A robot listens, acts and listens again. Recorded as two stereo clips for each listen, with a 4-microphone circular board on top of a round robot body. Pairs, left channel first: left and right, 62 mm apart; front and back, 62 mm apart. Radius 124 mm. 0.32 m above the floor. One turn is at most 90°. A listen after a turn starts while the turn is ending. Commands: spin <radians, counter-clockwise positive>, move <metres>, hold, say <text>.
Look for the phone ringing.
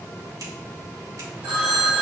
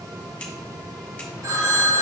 spin -1.57
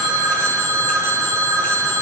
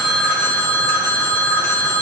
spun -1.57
spin -0.96
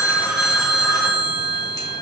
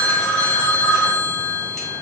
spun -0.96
say Facing the phone ringing, 2 to 4 m away.